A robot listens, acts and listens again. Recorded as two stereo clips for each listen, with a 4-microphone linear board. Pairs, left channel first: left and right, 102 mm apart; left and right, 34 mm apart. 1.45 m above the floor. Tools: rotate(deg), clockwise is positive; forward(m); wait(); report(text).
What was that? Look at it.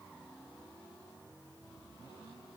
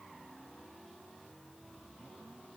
wait()
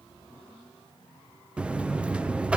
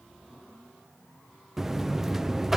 rotate(30)
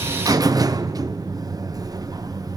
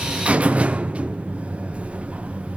rotate(140)
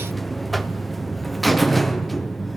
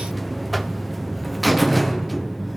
report("Found it: a buzzer, straight ahead.")